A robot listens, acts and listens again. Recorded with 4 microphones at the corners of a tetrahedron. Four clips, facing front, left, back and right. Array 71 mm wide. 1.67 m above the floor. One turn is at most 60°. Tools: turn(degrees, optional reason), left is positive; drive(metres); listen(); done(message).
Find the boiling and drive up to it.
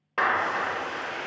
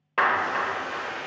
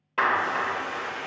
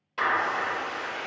drive(metres=1.0)
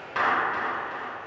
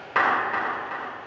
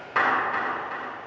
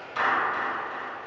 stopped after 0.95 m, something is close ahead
done("Arrived at the boiling, straight ahead.")